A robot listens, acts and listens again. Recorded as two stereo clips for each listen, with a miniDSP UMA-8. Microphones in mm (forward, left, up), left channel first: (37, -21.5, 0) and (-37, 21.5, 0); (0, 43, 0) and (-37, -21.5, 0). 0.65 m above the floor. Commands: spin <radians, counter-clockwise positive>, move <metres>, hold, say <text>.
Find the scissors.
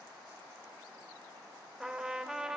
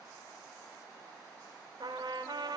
hold
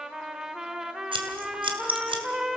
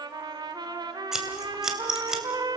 spin 2.71
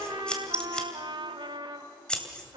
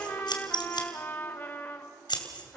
spin 0.87
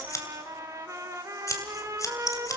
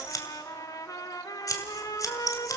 spin 0.35
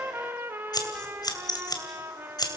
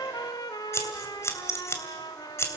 spin 0.17
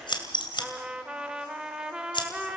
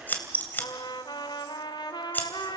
say Facing the scissors, 2 to 4 m away.